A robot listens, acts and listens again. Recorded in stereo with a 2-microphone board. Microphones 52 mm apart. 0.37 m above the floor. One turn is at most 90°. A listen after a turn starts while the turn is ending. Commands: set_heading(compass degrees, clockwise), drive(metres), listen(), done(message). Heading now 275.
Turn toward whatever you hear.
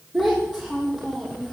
set_heading(305)
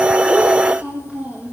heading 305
set_heading(35)
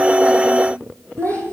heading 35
set_heading(100)
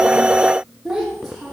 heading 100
done("Found it: a child speaking, straight ahead.")